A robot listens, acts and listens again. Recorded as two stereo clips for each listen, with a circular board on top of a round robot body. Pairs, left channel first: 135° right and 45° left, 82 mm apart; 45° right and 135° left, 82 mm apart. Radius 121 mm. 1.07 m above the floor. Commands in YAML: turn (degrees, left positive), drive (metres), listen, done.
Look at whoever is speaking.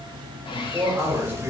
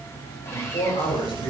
turn: -20
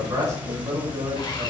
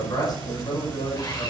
done: "Facing the man speaking, over 4 m away."